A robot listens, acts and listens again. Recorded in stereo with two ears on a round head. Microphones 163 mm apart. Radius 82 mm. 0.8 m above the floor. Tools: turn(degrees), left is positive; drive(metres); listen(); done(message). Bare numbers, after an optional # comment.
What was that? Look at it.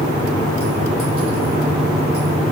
listen()
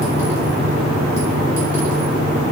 listen()
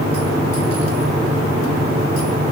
done("I can't make out anything.")